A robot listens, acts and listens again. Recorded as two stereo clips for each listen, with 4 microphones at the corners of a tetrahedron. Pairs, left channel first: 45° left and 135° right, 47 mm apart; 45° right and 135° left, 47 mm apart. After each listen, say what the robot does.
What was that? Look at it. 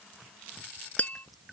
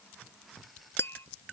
Turn 10° right.
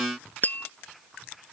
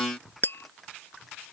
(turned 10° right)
Facing the tapping.